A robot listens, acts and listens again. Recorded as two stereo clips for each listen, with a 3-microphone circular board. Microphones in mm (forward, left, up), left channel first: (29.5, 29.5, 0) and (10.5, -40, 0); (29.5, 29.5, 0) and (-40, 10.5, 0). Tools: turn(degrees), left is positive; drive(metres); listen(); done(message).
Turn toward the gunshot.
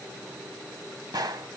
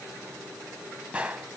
turn(degrees=-95)
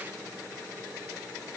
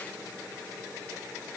done("Facing where the gunshot came from. I can't hear it now.")